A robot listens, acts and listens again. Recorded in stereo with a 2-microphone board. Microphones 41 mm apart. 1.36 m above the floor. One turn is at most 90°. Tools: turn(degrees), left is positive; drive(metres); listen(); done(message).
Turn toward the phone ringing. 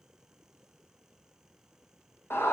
listen()
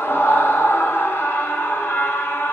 listen()
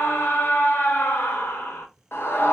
done("I can't make out a phone ringing, only a scream.")